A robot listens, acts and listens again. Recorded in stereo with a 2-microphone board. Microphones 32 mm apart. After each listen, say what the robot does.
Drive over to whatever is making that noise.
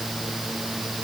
Keep listening.
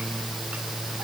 Keep listening.
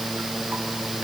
I can't make out anything to turn to.